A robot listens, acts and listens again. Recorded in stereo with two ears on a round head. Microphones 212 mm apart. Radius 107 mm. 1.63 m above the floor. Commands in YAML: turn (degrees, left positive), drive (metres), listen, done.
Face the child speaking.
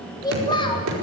turn: 20
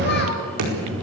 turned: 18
listen: true
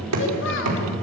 listen: true
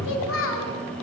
turn: 110
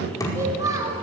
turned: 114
turn: -15
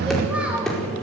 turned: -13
listen: true
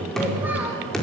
listen: true
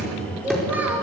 done: "Facing the child speaking."